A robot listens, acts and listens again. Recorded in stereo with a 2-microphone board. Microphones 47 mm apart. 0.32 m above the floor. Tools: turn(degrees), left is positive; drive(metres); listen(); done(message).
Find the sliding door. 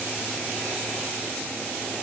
listen()
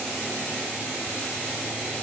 listen()
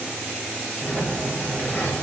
turn(degrees=25)
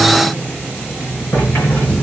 turn(degrees=130)
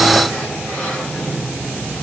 done("Facing the sliding door.")